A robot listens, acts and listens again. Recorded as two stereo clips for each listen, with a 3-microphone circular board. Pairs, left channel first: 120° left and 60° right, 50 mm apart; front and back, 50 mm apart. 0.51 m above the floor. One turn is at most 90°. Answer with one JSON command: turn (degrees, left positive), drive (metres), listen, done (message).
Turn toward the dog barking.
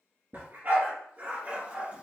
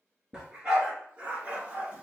{"turn": -90}
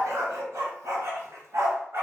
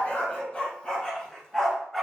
{"turn": -85}
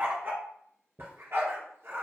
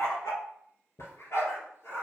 {"turn": -30}
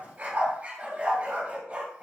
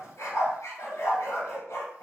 {"done": "Facing the dog barking, 2 to 4 m away."}